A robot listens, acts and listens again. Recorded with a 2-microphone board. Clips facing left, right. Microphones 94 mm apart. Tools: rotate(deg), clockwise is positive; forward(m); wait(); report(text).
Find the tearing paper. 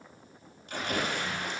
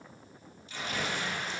rotate(-90)
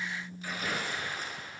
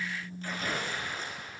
rotate(-10)
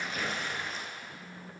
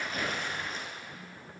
report("Facing the tearing paper.")